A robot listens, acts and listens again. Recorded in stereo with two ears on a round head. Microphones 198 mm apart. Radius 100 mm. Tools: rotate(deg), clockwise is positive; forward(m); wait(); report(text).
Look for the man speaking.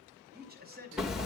rotate(45)
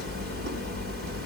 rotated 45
wait()
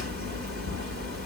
wait()
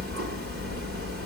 report("I heard a man speaking, but can't make it out now. It was about straight ahead or 90° right.")